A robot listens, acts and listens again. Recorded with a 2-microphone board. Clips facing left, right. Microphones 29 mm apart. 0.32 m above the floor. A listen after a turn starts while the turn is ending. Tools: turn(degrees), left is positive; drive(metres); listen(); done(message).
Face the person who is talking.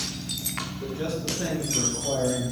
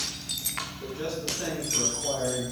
turn(degrees=-20)
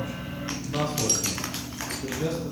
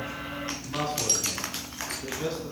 turn(degrees=-20)
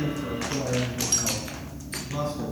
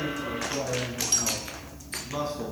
turn(degrees=-20)
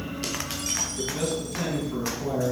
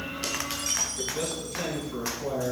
turn(degrees=30)
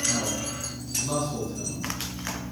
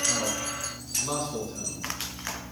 turn(degrees=-25)
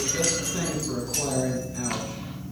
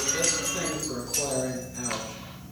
done("Found it: a man speaking, straight ahead, 2 to 4 m away.")